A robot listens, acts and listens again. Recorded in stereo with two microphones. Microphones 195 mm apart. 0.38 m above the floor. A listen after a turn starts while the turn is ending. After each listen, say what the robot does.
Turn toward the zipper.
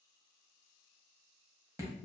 Keep listening.
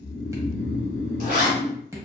Turn 50° right.
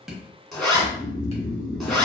Found it: a zipper, straight ahead.